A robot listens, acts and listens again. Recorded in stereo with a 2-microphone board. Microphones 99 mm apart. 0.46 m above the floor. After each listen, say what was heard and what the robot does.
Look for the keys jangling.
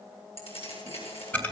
Turn 90° left.
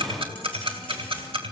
Keep listening.
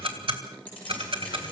The keys jangling is now 15° left. Turn 15° left.
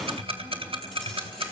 Keep listening.
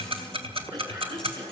Keep listening.
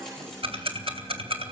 I heard keys jangling from this way, but can't make it out now.